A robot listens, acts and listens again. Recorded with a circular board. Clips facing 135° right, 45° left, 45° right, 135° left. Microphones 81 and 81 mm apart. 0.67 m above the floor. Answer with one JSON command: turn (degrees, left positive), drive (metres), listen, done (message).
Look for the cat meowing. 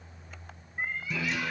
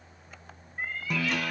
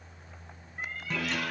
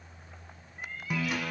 {"turn": -65}
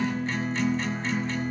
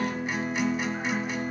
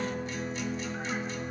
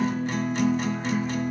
{"listen": true}
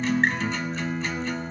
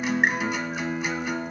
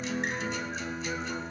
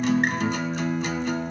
{"listen": true}
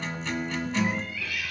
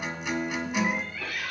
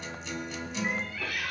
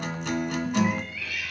{"done": "Found it: a cat meowing, straight ahead, under 1 m away."}